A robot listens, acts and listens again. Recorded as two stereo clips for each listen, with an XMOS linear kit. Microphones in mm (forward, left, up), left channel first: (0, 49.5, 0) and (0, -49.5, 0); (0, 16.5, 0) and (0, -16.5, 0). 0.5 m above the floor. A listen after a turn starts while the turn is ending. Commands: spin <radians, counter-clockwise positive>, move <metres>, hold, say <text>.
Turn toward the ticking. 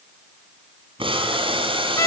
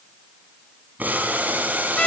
hold
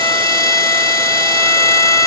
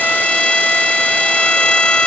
hold
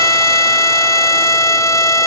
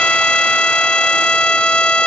say I can't make out ticking, only boiling and a violin.